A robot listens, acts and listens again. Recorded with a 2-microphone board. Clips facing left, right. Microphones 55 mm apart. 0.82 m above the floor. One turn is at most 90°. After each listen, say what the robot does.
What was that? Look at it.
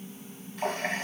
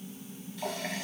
Turn 40° left.
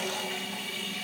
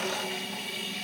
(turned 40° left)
Found it: a running tap, straight ahead, 2 to 4 m away.